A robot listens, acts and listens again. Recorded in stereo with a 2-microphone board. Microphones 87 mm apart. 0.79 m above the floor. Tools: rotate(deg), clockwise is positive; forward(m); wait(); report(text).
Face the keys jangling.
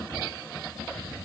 wait()
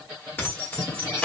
rotate(-30)
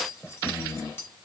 rotate(-25)
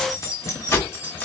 rotate(-20)
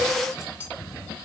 rotate(-25)
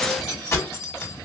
rotate(-145)
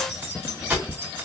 rotate(25)
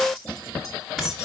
report("Found it: keys jangling, straight ahead.")